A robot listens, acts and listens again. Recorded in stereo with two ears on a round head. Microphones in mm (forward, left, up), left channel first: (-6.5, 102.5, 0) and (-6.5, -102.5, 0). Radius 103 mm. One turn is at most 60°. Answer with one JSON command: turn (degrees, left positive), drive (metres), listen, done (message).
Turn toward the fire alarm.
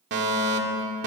{"turn": -45}
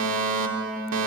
{"turn": -60}
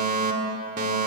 {"turn": -40}
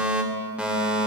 {"done": "Facing the fire alarm, 2 to 4 m away."}